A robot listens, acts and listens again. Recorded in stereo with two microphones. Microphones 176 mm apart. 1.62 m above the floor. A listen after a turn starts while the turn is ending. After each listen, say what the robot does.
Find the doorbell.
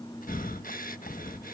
Keep listening.
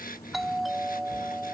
Turn 30° left.
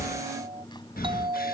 Turn 30° right.
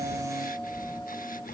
Keep listening.
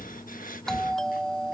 Facing the doorbell.